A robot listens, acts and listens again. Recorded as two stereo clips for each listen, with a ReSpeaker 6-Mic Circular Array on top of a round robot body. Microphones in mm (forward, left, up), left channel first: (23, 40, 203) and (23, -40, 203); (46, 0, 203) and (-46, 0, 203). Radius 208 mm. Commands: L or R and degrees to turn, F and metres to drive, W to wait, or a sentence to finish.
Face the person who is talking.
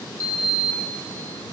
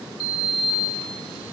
W
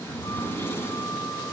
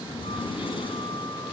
W
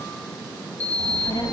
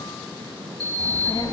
L50
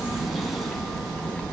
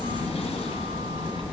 L15
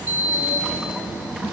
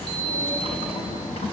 Facing the child speaking, over 4 m away.